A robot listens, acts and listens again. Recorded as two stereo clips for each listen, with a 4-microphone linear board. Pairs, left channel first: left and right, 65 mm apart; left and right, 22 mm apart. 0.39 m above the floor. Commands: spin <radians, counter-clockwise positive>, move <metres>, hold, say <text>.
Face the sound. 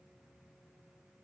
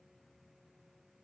hold
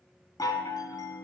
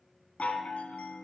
spin 1.57
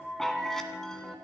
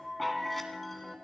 say Found it: a chime, straight ahead, 1 to 2 m away.